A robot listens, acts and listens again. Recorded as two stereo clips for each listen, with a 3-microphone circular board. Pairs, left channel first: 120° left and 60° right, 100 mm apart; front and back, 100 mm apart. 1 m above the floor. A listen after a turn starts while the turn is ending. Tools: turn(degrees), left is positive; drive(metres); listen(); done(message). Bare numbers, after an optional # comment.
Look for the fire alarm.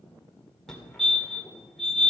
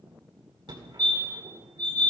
# The fire alarm: 160° right.
turn(-160)
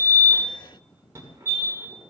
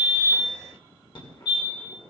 # The fire alarm is now 10° right.
turn(-10)
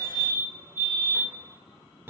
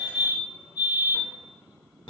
done("Found it: a fire alarm, straight ahead.")